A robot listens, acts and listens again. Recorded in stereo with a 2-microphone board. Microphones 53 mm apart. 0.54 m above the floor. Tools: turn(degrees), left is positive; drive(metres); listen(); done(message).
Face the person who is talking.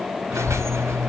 turn(degrees=30)
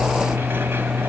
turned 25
turn(degrees=-30)
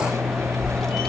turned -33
done("Facing the child speaking, 1 to 2 m away.")